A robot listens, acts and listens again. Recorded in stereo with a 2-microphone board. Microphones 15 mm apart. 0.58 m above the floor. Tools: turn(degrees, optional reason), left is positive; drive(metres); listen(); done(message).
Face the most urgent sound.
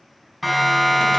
turn(degrees=-30)
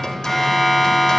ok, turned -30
turn(degrees=25, reason="So it is at 25° left.")
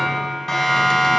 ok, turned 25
turn(degrees=25, reason="The siren is now 25° left.")
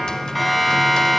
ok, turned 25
done("Found it: a siren, straight ahead, over 4 m away.")